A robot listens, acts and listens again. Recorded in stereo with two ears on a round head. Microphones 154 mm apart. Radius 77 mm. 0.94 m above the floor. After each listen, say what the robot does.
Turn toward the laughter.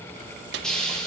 Keep listening.
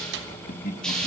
Turn 50° left.
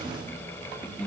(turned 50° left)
Facing the laughter, 2 to 4 m away.